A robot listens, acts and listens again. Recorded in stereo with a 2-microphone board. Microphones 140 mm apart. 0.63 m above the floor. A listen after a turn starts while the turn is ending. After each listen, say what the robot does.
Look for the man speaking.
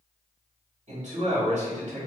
Turn 60° right.
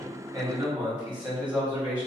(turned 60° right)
Turn 40° right.
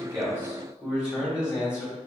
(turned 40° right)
Facing the man speaking, 1 to 2 m away.